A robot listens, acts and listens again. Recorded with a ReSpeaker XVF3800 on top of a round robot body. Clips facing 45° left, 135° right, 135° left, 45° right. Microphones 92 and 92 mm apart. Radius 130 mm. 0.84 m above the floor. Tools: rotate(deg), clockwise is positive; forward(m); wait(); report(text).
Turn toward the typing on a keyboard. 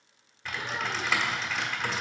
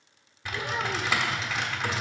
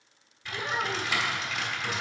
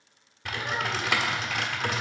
rotate(55)
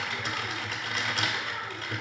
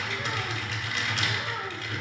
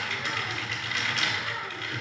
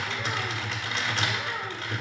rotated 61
report("Facing the typing on a keyboard, 1 to 2 m away.")